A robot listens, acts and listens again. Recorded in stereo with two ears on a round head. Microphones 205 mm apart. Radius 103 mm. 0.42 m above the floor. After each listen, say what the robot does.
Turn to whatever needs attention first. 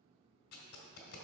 Keep listening.
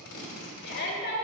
Turn 45° left.
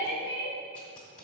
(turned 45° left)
Turn 75° left.
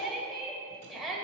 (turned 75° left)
Found it: a shout, straight ahead, 1 to 2 m away.